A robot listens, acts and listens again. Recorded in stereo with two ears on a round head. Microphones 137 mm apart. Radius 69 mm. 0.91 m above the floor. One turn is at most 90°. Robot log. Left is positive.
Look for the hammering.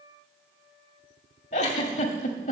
cmd idle
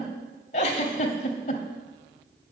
cmd idle
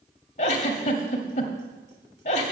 end: I can't make out hammering to turn to.